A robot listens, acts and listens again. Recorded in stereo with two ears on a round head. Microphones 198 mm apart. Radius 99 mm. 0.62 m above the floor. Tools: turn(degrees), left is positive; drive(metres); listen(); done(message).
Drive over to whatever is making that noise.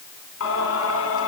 turn(degrees=60)
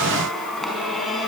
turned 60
drive(metres=1.0)
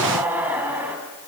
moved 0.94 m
turn(degrees=-10)
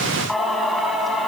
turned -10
drive(metres=1.0)
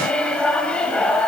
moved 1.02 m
drive(metres=1.0)
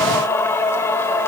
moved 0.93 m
turn(degrees=10)
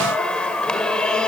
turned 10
drive(metres=1.0)
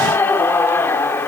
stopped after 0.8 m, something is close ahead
turn(degrees=10)
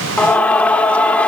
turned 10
done("Arrived at the singing, straight ahead.")